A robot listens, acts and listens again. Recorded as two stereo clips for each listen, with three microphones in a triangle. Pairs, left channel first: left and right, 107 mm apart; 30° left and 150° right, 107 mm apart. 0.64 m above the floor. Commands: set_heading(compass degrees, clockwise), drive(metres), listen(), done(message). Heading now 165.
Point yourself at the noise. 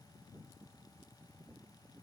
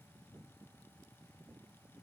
listen()
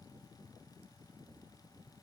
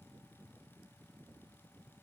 listen()
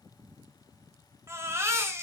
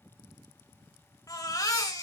set_heading(190)
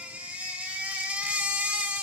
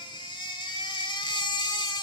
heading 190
set_heading(205)
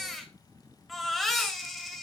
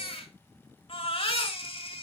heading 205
done("Found it: a baby crying, straight ahead, 1 to 2 m away.")